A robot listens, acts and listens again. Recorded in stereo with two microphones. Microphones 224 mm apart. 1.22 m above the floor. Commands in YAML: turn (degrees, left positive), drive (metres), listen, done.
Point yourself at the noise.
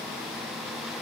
listen: true
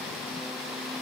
listen: true
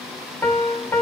turn: 30
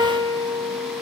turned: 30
turn: -20
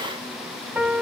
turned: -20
done: "Found it: a piano, straight ahead, 2 to 4 m away."